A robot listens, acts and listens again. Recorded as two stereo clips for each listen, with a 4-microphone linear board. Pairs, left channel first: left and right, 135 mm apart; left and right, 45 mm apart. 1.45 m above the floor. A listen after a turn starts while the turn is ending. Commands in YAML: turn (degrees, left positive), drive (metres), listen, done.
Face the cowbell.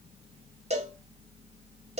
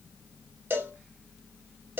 turn: -50
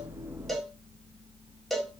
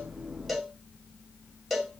done: "Found it: a cowbell, straight ahead."